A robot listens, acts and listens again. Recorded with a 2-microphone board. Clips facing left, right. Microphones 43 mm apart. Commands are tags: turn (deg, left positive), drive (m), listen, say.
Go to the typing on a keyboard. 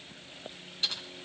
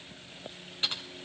<turn deg="-30"/>
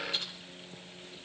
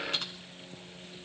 <turn deg="-120"/>
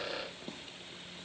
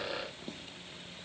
<listen/>
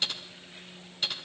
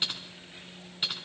<turn deg="-15"/>
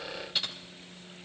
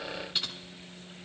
<drive m="1.0"/>
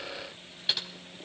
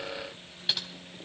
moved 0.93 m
<drive m="1.0"/>
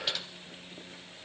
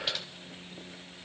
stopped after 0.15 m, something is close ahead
<say>Arrived at the typing on a keyboard, straight ahead.</say>